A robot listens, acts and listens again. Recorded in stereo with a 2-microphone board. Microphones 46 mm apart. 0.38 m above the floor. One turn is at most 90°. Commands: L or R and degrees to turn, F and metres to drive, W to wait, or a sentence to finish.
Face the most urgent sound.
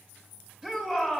R30
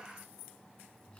W
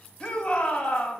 L15
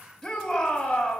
Facing the shout, 2 to 4 m away.